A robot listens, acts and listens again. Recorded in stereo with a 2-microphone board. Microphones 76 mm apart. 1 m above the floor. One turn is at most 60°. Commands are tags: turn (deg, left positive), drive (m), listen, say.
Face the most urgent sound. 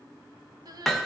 <turn deg="-55"/>
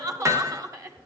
<turn deg="-55"/>
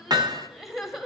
<say>Facing the crying, 1 to 2 m away.</say>